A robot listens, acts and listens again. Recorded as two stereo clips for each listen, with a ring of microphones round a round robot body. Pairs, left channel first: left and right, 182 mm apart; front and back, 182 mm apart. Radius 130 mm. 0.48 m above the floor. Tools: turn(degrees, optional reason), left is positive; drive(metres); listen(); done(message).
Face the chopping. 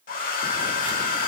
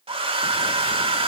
listen()
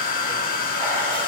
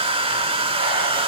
listen()
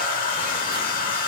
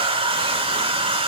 done("I can't make out chopping, only a hair dryer.")